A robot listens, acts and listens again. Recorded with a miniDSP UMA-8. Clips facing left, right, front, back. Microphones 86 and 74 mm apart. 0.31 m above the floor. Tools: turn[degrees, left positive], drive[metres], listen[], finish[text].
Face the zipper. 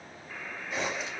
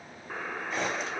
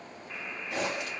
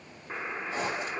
Action: finish[Facing the zipper.]